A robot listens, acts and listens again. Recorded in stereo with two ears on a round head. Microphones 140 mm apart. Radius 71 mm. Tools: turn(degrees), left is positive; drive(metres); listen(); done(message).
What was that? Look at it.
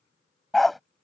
turn(degrees=30)
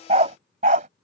turn(degrees=-50)
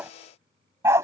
turn(degrees=-20)
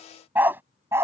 turn(degrees=-15)
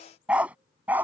turn(degrees=-10)
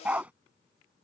turn(degrees=-10)
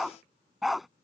done("Facing the dog barking.")